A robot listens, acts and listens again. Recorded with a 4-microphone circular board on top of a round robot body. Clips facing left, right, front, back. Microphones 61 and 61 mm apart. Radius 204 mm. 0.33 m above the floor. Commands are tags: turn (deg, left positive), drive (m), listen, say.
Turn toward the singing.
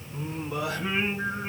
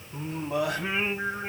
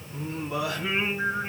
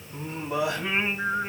<turn deg="-110"/>
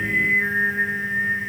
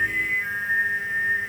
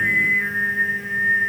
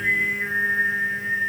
<turn deg="35"/>
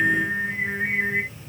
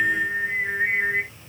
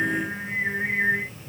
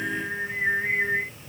<turn deg="10"/>
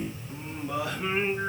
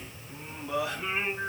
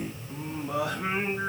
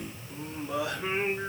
<say>Found it: singing, straight ahead.</say>